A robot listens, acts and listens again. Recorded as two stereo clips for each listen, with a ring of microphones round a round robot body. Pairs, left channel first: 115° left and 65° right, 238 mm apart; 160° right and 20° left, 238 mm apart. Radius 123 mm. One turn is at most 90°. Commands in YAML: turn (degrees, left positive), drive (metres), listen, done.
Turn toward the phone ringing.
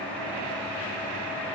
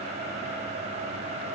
listen: true
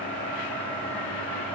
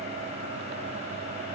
listen: true
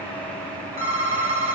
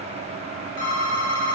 turn: -90
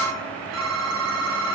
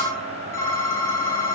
turn: -80
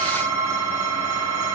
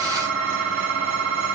turn: -10
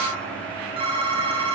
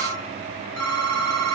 done: "Found it: a phone ringing, straight ahead, 2 to 4 m away."